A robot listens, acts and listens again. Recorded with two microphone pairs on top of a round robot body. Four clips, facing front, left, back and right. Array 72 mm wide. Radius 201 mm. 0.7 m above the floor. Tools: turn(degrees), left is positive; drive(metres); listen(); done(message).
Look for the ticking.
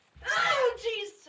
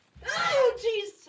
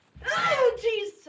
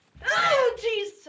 listen()
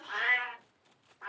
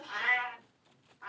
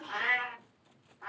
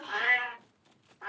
listen()
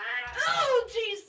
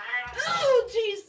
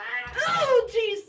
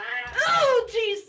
done("I can't make out ticking to turn to.")